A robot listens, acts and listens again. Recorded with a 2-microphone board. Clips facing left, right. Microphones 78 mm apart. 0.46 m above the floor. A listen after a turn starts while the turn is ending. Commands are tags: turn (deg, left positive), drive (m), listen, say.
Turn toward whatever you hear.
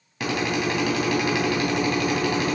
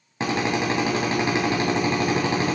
<turn deg="-30"/>
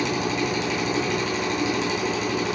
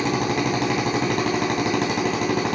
<turn deg="-120"/>
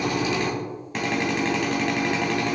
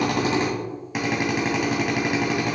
<turn deg="-10"/>
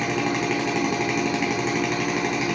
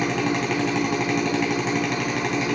<say>Found it: a drill, straight ahead, 2 to 4 m away.</say>